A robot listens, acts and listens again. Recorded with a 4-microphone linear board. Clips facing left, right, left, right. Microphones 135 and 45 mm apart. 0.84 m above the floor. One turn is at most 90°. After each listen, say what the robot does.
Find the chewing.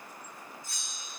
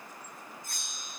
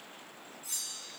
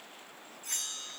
Keep listening.
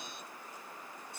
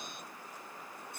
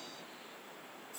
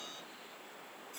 Keep listening.
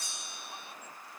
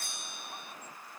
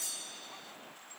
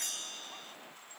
I can't make out chewing to turn to.